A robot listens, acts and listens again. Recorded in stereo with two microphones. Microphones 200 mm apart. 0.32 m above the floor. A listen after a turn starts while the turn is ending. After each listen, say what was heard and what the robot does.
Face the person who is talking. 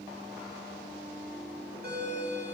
Keep listening.
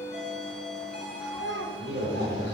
The child speaking: about 65° left or 115° left. Turn 65° left.
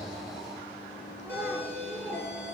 Found it: a child speaking, straight ahead.